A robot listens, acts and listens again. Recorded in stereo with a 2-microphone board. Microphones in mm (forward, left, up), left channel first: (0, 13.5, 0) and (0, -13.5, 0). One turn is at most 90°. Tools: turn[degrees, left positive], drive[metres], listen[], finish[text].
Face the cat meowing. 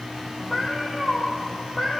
Thought: The cat meowing: about 15° left or 165° left.
Action: turn[15]
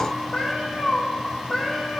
Thought: The cat meowing: about 20° left or 160° left.
Action: turn[20]
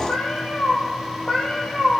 Thought: The cat meowing: about 20° left or 160° left.
Action: turn[20]
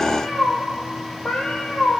Thought: The cat meowing: about 35° left or 145° left.
Action: turn[35]
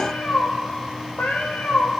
Thought: So it is at 110° left.
Action: turn[90]
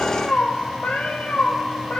Thought: The cat meowing is now 55° left.
Action: turn[55]
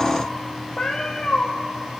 Thought: The cat meowing is now 15° left.
Action: turn[15]
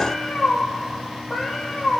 Action: finish[Found it: a cat meowing, straight ahead, 1 to 2 m away.]